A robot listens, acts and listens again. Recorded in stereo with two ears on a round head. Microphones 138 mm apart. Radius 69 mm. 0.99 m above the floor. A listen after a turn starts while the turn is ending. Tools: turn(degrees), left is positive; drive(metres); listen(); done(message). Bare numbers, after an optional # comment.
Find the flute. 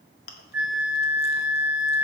turn(-30)
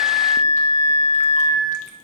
# So it is at 20° left.
turn(20)
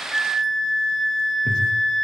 done("Found it: a flute, straight ahead, 1 to 2 m away.")